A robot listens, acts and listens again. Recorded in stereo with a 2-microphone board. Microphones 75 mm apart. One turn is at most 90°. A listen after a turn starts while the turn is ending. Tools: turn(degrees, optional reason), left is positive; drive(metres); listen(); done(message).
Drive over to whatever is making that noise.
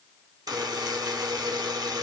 turn(degrees=-55, reason="The buzzer: about 55° right or 125° right.")
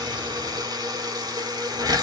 turn(degrees=-70, reason="So it is at 70° right.")
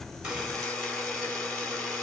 turn(degrees=10, reason="The buzzer is now 10° left.")
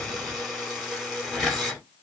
drive(metres=1.0)
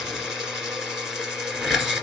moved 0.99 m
drive(metres=1.0)
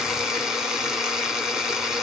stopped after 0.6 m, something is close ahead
done("I am next to the buzzer.")